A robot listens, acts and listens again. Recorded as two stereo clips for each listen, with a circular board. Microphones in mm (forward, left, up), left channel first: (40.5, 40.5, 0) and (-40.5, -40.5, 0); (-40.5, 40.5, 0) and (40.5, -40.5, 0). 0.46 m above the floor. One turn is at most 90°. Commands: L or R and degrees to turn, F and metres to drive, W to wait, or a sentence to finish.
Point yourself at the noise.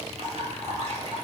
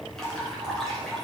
R90
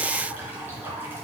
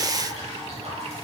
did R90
R65
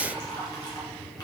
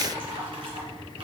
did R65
R10
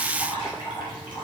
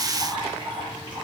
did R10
Found it: dripping, straight ahead, 2 to 4 m away.